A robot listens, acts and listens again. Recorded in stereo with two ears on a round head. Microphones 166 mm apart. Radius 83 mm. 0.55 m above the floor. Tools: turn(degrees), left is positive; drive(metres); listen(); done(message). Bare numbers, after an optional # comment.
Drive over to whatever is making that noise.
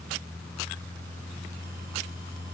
listen()
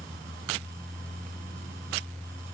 listen()
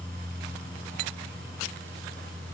done("I can't make out anything to turn to.")